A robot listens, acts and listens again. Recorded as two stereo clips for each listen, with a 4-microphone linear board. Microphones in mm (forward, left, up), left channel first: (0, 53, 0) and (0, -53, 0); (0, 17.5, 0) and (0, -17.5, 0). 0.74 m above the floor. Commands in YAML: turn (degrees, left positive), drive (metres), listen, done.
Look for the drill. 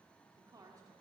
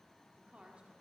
listen: true
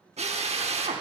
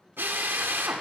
turn: -90
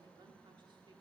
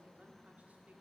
listen: true
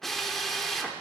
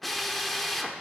done: "Facing the drill."